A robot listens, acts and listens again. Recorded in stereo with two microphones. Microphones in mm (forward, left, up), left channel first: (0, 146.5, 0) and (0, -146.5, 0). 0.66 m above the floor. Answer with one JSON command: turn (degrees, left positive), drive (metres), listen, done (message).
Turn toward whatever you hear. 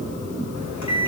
{"turn": 75}
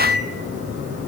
{"turn": 30}
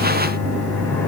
{"done": "Found it: a microwave, straight ahead."}